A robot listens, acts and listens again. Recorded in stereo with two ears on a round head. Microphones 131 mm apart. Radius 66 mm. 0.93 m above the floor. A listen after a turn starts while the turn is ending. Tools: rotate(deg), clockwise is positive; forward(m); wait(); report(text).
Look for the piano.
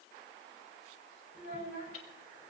wait()
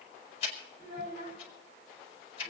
wait()
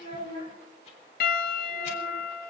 rotate(-70)
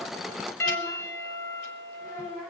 rotate(-15)
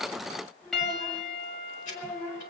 report("Found it: a piano, straight ahead, 1 to 2 m away.")